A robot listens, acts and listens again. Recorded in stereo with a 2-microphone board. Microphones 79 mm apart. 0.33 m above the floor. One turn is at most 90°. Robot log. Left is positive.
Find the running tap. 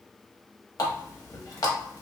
note: The running tap: about 55° left or 125° left.
cmd yaw +55
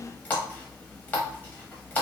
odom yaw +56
note: So it is at 25° left.
cmd yaw +25
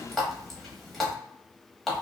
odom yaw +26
end: Facing the running tap.